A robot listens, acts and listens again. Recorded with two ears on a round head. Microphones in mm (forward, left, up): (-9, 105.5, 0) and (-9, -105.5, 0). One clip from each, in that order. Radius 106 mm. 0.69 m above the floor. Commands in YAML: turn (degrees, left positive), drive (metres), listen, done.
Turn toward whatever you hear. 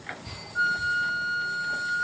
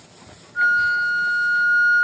turn: -30
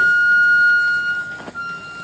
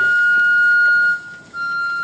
turn: -140
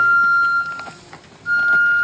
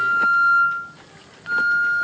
turn: 40
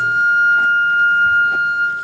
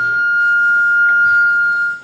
done: "Facing the flute."